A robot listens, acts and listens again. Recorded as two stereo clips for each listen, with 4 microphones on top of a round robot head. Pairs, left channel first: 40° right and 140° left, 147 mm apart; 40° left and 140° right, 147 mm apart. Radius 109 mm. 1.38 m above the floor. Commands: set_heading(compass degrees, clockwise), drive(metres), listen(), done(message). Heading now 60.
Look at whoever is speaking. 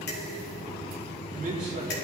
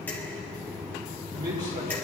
set_heading(235)
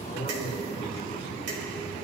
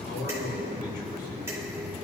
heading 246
set_heading(231)
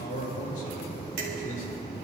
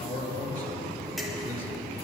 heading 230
done("Found it: a man speaking, straight ahead, over 4 m away.")